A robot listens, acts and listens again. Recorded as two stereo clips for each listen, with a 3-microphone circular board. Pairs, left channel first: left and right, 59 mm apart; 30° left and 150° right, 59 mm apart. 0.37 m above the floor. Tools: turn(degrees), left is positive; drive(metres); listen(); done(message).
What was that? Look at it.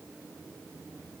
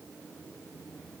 listen()
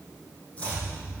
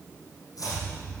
turn(degrees=20)
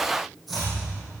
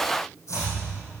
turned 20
done("Facing the chopping.")